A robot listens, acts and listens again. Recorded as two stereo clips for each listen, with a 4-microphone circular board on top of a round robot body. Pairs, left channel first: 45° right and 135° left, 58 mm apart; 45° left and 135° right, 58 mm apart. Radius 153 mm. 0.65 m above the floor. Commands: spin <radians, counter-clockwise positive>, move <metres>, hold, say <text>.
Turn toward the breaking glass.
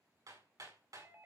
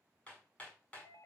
hold
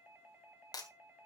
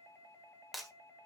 spin -0.79
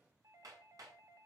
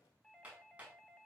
say Facing where the breaking glass came from. I can't hear it now.